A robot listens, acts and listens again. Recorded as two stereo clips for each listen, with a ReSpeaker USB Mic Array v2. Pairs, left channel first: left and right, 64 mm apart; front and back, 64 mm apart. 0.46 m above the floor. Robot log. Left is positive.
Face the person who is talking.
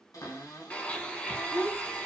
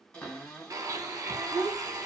note: The child speaking: 120° left.
cmd yaw +120
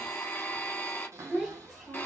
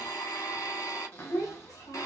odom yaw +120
note: The child speaking is now 10° right.
cmd yaw -10
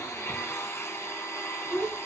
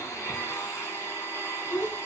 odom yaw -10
end: Found it: a child speaking, straight ahead.